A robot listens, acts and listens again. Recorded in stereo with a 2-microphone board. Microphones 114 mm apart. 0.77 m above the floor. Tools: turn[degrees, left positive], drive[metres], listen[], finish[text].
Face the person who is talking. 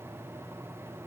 Action: listen[]
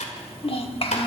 Thought: The child speaking: about 50° left or 130° left.
Action: turn[50]
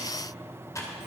Action: listen[]
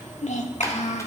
Thought: So it is at 80° left.
Action: turn[80]
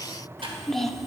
Action: finish[Facing the child speaking.]